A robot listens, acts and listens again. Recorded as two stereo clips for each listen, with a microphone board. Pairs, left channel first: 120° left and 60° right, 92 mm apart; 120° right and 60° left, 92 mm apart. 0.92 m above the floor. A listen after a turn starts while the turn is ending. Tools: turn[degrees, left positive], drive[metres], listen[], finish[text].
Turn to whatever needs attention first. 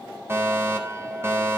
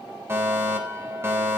Action: finish[Facing the fire alarm, 2 to 4 m away.]